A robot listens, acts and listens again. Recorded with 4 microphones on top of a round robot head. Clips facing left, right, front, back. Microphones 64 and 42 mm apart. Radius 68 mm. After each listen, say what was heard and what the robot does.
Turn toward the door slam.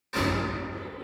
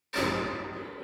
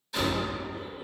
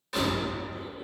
The door slam: 155° left. Turn 155° left.
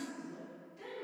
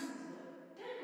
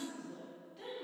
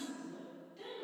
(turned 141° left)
Nothing new. It was at 15° left. Turn 15° left.
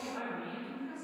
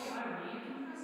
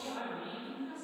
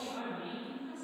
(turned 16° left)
Facing where the door slam came from. I can't hear it now.